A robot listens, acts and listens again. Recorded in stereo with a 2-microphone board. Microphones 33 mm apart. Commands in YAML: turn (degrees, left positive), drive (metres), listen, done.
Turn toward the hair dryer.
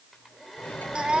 turn: -30
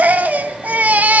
listen: true
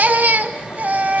listen: true
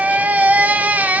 done: "I heard a hair dryer, but can't make it out now. It was about 25° left or 145° right."